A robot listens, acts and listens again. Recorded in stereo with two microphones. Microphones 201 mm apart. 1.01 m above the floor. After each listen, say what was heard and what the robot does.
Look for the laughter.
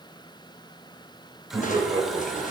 The laughter: about 25° right or 155° right. Turn 25° right.
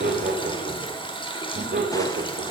So it is at 120° right. Turn 120° right.
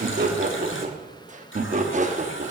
The laughter is now 40° right. Turn 40° right.
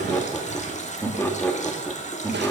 The laughter is now 10° left. Turn 10° left.
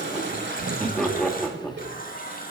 Facing the laughter, 1 to 2 m away.